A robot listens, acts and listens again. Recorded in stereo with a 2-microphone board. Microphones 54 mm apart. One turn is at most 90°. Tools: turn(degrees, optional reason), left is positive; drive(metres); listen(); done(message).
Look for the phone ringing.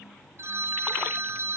turn(degrees=-60, reason="The phone ringing: about 60° right or 120° right.")
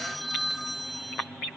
done("Facing the phone ringing, 1 to 2 m away.")